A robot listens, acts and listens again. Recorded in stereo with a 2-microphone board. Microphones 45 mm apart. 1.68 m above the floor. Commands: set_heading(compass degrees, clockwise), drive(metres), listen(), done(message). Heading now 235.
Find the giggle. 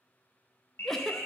set_heading(205)
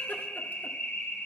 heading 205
listen()
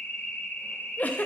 set_heading(60)
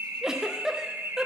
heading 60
set_heading(70)
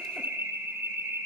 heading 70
listen()
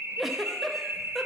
done("Found it: a giggle, straight ahead, under 1 m away.")